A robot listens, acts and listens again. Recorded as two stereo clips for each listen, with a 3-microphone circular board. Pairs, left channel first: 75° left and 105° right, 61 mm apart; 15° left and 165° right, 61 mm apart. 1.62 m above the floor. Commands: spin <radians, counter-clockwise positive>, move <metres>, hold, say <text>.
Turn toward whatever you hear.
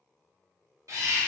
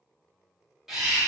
spin -1.40
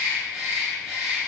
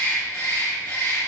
spin -0.44
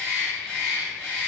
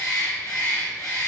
say Facing the bird, 1 to 2 m away.